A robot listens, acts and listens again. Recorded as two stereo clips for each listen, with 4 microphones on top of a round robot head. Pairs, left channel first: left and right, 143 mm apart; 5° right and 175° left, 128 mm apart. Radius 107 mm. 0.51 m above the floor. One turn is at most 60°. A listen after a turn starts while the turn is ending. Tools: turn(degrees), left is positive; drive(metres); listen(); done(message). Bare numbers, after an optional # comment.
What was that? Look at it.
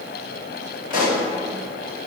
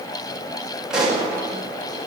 # The pop: 90° left.
turn(60)
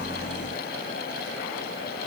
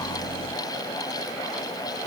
# Nothing new. It was at 30° left.
turn(30)
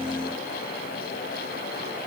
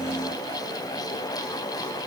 done("I heard a pop from this way, but can't make it out now.")